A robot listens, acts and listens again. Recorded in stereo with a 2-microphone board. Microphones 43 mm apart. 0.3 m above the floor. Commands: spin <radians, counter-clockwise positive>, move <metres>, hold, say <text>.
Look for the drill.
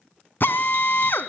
spin 0.96
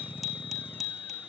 hold
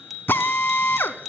spin 1.13
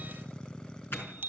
hold
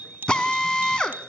spin 0.35
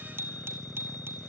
hold
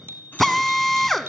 say Found it: a drill, straight ahead, 1 to 2 m away.